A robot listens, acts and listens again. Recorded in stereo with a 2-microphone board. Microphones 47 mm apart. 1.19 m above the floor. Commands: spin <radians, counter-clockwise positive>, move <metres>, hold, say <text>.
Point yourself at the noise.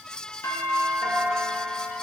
spin 1.22
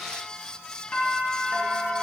spin 0.61
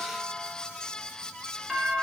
spin -0.17
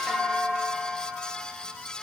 say Facing the doorbell, 2 to 4 m away.